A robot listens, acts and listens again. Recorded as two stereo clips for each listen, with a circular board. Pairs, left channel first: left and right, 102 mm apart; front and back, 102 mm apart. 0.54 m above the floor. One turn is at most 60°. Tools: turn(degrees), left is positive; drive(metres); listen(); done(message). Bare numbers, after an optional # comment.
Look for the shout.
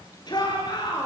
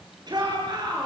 # The shout: 135° left.
turn(60)
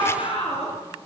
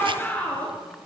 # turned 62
# The shout is now 75° left.
turn(60)
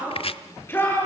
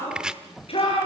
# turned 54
# The shout is now 20° left.
turn(20)
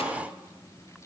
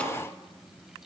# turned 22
listen()
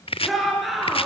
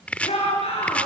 done("Found it: a shout, straight ahead.")